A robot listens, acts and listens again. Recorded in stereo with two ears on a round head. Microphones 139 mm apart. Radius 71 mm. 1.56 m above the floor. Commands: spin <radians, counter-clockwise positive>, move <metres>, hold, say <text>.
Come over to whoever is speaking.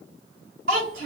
spin -1.13
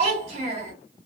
spin -0.70
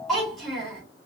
move 1.0
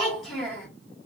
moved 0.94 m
move 1.0
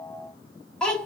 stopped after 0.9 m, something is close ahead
say Arrived at the child speaking, straight ahead.